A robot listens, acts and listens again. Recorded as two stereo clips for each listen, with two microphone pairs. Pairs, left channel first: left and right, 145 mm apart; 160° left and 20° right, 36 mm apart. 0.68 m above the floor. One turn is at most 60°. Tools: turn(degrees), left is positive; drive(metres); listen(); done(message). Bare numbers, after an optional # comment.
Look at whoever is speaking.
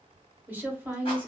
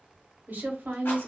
# The woman speaking: 15° right.
turn(-15)
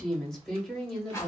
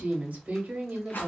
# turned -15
done("Found it: a woman speaking, straight ahead.")